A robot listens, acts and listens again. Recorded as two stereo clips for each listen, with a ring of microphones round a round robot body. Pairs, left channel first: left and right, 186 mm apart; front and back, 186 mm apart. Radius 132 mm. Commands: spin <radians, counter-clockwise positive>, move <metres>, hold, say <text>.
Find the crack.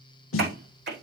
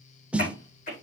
spin -1.13
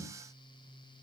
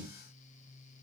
say I heard a crack from this way, but can't make it out now.